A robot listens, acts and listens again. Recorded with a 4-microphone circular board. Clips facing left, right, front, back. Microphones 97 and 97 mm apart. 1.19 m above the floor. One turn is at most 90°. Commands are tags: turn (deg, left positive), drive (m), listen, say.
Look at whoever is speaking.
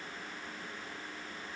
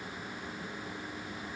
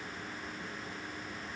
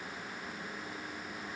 <listen/>
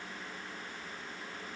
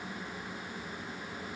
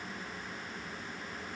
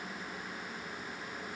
<listen/>
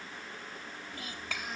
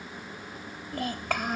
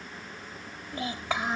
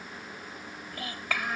<turn deg="-65"/>
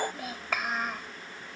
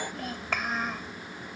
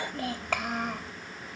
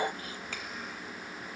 <say>Facing the child speaking.</say>